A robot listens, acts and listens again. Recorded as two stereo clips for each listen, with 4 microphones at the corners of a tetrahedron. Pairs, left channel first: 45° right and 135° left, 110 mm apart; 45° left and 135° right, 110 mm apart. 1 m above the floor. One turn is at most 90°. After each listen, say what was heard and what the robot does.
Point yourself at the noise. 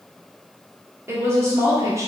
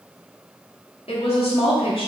The woman speaking: 75° left. Turn 75° left.
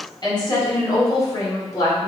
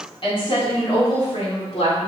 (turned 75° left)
The woman speaking is now 15° left. Turn 15° left.
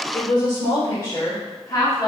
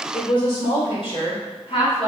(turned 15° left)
The woman speaking is now 10° left. Turn 10° left.
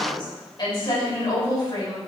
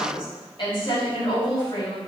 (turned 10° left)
Found it: a woman speaking, straight ahead.